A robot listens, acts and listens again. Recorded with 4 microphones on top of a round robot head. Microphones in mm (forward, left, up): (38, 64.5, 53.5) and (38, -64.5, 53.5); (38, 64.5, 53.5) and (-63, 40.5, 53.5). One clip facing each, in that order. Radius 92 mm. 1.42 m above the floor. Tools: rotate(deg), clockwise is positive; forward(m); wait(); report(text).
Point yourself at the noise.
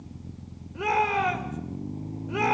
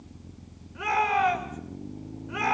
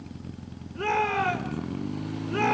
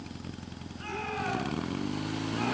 rotate(-30)
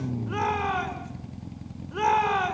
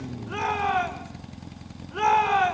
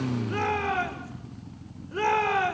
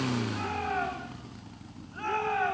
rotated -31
report("Facing the shout.")